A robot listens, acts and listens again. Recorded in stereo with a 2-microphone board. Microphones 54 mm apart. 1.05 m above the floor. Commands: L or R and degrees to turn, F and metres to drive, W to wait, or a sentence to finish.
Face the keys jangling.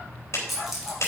R30
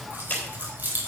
R145
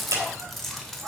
Facing the keys jangling, 2 to 4 m away.